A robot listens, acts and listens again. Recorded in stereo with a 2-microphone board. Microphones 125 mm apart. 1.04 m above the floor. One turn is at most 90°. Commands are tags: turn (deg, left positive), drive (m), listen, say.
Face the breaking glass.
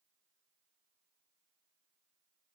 <listen/>
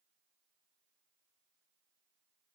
<listen/>
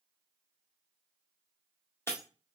<turn deg="20"/>
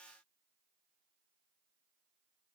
<listen/>
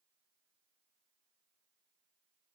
<say>I heard breaking glass, but can't make it out now. It was about straight ahead or 140° left.</say>